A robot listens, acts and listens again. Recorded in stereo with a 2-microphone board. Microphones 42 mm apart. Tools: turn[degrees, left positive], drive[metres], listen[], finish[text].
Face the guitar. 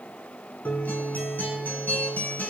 Thought: The guitar: about 50° left or 130° left.
Action: turn[50]
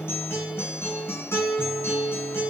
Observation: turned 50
Thought: So it is at 80° left.
Action: turn[80]
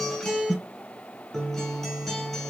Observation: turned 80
Action: finish[Facing the guitar, under 1 m away.]